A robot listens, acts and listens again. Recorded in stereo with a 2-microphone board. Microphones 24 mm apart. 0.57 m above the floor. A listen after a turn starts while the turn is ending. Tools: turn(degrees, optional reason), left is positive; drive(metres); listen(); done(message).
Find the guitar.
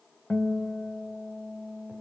turn(degrees=90)
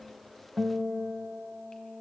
turn(degrees=-15, reason="So it is at 15° right.")
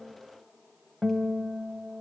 done("Facing the guitar.")